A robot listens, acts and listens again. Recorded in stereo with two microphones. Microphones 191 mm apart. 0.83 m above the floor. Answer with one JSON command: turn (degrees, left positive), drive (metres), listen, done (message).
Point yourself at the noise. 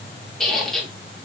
{"turn": 30}
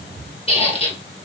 {"turn": 145}
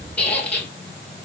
{"turn": 10}
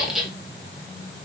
{"done": "Found it: a squeak, straight ahead, 1 to 2 m away."}